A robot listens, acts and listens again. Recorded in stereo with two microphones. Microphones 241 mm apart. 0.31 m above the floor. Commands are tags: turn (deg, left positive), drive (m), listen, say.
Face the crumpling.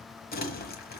<turn deg="40"/>
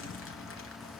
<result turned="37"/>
<turn deg="95"/>
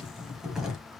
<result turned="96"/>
<say>Found it: crumpling, straight ahead, 1 to 2 m away.</say>